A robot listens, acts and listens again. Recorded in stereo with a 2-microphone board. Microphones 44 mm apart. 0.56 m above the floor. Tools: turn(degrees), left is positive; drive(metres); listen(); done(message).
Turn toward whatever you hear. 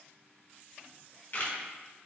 turn(degrees=50)
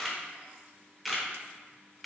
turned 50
done("Found it: a camera shutter, straight ahead.")